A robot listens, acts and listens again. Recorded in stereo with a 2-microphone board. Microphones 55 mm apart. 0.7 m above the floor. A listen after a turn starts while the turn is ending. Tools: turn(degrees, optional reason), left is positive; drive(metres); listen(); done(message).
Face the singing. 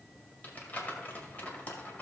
listen()
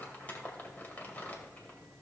listen()
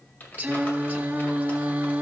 turn(degrees=-30, reason="The singing: about 30° right or 150° right.")
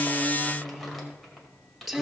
done("Facing the singing, under 1 m away.")